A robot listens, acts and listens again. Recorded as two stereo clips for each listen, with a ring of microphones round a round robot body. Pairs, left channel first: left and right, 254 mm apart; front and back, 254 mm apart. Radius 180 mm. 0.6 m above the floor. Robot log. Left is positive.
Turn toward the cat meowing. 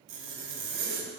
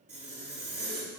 cmd idle
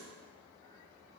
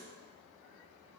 cmd idle
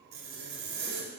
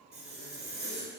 end: I can't make out a cat meowing to turn to.